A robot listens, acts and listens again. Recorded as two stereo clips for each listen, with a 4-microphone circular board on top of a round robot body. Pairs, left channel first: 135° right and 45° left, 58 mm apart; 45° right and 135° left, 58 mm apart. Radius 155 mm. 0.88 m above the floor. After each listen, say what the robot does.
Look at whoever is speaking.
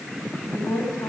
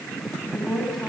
Turn 135° right.
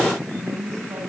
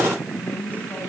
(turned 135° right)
Turn 15° left.
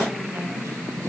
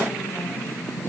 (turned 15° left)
Keep listening.
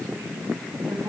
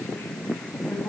Keep listening.
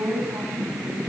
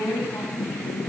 Found it: a woman speaking, straight ahead, over 4 m away.